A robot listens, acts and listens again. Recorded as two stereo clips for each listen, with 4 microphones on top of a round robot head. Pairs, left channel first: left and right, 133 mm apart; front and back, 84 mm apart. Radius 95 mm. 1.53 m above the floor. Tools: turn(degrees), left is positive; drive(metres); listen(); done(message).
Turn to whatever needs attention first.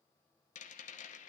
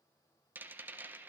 listen()
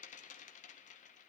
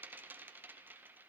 listen()
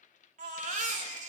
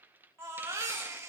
turn(degrees=-110)
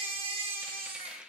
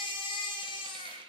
turn(degrees=-35)
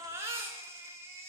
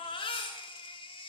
turn(degrees=-15)
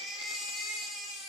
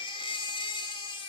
done("Found it: a baby crying, straight ahead.")